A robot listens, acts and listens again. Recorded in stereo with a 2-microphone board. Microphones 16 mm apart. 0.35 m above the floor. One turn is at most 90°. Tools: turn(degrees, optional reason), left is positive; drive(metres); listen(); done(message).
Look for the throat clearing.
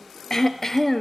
turn(degrees=30, reason="The throat clearing: about 30° left or 150° left.")
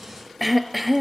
done("Found it: throat clearing, straight ahead.")